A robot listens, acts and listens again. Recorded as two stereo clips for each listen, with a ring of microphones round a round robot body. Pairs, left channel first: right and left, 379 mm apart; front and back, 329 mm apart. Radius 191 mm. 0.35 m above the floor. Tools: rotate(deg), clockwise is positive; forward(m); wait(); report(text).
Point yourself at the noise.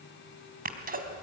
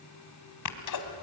rotate(-25)
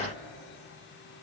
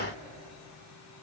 report("I heard a sneeze from this way, but can't make it out now.")